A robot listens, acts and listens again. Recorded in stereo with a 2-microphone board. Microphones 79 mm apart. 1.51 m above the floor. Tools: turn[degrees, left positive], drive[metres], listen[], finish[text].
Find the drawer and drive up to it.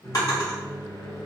Thought: The drawer: about 55° left or 125° left.
Action: turn[55]
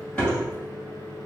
Thought: So it is at 20° left.
Action: turn[20]
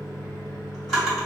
Action: drive[1.0]
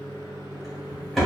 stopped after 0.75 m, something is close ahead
Action: finish[I am next to the drawer.]